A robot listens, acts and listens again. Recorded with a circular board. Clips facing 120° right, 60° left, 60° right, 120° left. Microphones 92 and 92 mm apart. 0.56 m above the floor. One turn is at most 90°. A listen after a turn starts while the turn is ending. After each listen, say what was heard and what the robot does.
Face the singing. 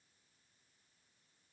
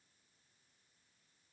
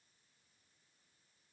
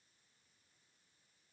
Keep listening.
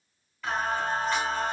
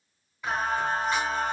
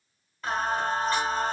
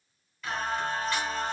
The singing: 15° right. Turn 15° right.
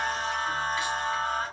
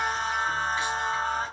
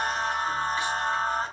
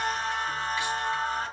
Found it: singing, straight ahead.